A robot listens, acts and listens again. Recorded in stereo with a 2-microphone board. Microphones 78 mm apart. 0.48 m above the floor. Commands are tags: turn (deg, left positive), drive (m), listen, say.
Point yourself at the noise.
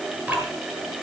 <turn deg="-25"/>
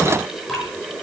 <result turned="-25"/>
<say>Facing the dripping.</say>